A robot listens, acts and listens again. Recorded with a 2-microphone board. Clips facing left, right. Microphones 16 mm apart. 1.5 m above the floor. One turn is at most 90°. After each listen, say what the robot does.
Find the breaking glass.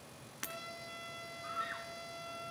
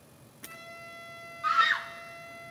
Turn 70° left.
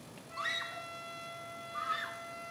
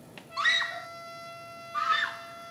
Keep listening.
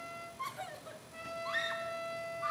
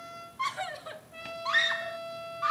I heard breaking glass, but can't make it out now. It was about straight ahead or 40° left.